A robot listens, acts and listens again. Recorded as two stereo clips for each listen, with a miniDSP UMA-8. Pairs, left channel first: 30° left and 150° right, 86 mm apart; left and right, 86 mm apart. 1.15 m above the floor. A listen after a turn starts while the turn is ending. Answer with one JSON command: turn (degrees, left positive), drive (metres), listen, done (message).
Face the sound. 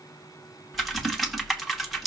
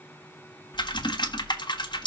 {"turn": 120}
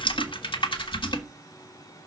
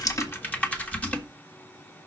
{"turn": 15}
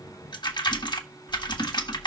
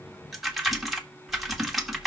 {"done": "Found it: typing on a keyboard, straight ahead, 1 to 2 m away."}